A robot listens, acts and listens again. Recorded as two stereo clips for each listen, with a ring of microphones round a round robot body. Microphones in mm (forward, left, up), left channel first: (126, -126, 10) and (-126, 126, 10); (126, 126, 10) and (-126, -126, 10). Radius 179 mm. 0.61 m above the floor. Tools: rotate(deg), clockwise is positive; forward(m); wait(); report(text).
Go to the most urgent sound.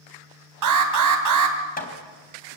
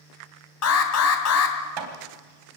rotate(-95)
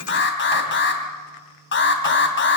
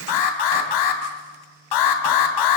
rotate(-15)
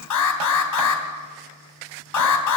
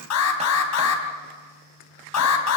forward(1.0)
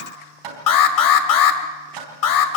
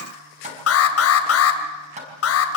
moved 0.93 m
rotate(10)
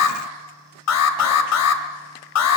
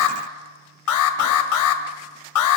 forward(1.0)
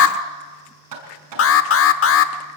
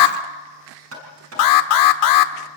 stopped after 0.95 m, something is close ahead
rotate(-10)
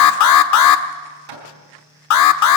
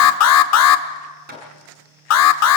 report("I am next to the alarm.")